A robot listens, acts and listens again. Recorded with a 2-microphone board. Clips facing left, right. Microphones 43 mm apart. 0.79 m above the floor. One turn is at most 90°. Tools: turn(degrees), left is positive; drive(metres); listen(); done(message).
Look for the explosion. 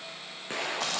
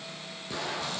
turn(degrees=40)
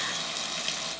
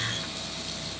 listen()
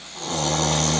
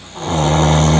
done("I heard an explosion, but can't make it out now. It was about straight ahead or 100° left.")